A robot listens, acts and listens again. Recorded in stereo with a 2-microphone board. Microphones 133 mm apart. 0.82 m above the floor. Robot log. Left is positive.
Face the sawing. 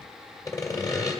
note: The sawing: about 30° left or 150° left.
cmd yaw +30
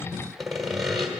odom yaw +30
end: Found it: sawing, straight ahead, 2 to 4 m away.